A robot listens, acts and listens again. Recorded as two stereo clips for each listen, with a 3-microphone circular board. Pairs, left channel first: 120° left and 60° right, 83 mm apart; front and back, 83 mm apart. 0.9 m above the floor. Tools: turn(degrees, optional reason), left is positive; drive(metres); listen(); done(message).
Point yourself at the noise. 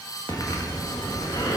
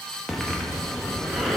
turn(degrees=85, reason="The breathing: 85° left.")
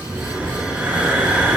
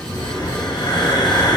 turn(degrees=10, reason="The breathing is now 10° left.")
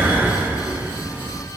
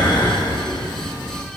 done("Facing the breathing, 1 to 2 m away.")